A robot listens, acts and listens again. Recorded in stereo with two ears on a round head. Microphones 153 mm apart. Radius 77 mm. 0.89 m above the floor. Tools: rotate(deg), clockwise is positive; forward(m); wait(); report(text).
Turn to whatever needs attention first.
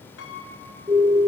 rotate(20)
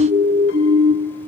rotate(135)
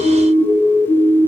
report("Facing the siren.")